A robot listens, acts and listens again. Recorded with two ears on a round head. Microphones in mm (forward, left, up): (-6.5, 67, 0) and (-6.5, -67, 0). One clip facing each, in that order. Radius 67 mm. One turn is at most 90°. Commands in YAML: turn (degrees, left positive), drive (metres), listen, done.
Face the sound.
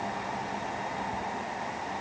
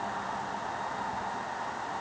listen: true
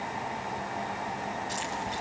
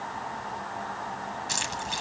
turn: -90
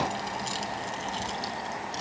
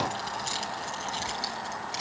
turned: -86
turn: -10
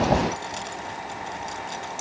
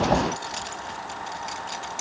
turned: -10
turn: -10
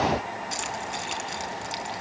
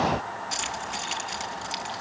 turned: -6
done: "Found it: keys jangling, straight ahead."